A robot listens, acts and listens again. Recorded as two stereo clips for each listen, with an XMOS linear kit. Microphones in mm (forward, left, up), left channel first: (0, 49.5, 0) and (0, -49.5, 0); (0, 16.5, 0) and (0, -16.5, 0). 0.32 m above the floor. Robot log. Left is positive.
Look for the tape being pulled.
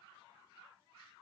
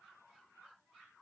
cmd idle
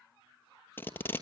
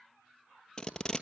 note: The tape being pulled: about 20° left or 160° left.
cmd yaw +20
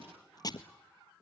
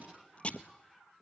note: So it is at 140° left.
cmd yaw +140
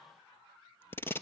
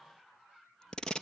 note: The tape being pulled is now 25° left.
cmd yaw +25
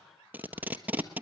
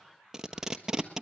note: The tape being pulled is now 15° right.
cmd yaw -15
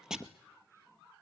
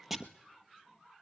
end: Found it: tape being pulled, straight ahead, 1 to 2 m away.